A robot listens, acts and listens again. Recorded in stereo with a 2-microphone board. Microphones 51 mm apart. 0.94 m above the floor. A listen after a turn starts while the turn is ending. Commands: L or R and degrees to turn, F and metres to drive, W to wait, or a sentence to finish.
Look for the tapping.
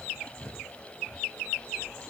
W
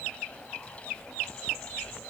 W
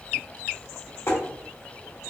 L90
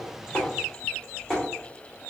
Found it: tapping, straight ahead, 1 to 2 m away.